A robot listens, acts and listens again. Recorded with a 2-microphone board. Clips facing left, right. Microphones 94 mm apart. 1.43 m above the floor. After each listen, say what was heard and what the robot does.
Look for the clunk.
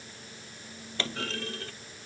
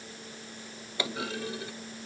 Turn 30° right.
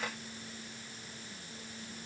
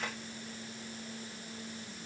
Keep listening.
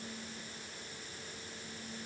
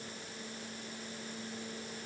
I heard a clunk, but can't make it out now. It was about 20° left or 140° right.